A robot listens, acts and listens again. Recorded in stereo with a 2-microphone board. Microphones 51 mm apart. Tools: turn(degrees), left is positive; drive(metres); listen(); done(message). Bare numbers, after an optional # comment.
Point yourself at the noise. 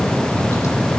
listen()
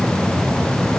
listen()
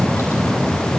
done("I can't make out anything.")